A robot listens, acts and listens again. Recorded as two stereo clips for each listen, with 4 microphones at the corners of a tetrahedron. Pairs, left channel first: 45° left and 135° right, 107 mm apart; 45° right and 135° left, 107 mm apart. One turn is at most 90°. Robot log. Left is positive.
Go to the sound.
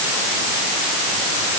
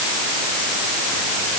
cmd idle
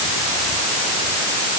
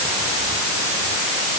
cmd idle
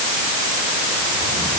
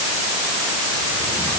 end: I can't make out anything.